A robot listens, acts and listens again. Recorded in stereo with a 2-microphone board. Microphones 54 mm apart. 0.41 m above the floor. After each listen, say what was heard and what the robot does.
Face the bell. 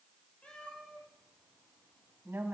Keep listening.
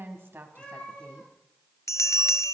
The bell: about 70° left or 110° left. Turn 70° left.
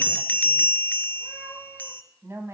So it is at 35° left. Turn 35° left.
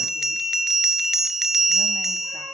The bell is now 10° right. Turn 10° right.
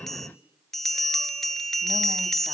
Found it: a bell, straight ahead, under 1 m away.